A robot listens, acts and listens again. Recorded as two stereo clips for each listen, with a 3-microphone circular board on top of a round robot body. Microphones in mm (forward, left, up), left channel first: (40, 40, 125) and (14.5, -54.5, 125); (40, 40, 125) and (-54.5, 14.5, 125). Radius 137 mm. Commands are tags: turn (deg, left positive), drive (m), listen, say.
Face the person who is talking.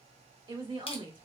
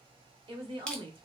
<turn deg="-140"/>
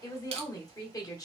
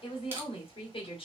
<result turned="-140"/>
<turn deg="25"/>
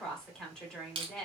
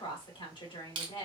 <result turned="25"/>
<turn deg="-10"/>
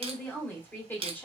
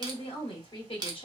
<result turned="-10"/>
<say>Found it: a woman speaking, straight ahead, 1 to 2 m away.</say>